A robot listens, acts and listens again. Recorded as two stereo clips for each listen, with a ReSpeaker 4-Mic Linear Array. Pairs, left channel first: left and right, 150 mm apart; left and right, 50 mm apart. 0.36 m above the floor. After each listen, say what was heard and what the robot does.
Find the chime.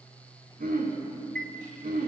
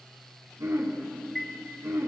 Turn 30° left.
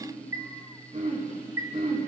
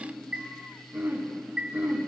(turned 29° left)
So it is at 25° right. Turn 25° right.
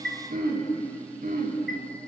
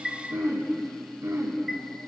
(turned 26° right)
Facing the chime.